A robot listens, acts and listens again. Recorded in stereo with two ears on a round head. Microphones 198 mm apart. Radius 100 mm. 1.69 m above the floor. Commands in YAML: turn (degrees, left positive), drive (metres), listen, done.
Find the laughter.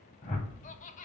turn: 35
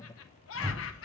turn: 115
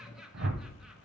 done: "Found it: laughter, straight ahead."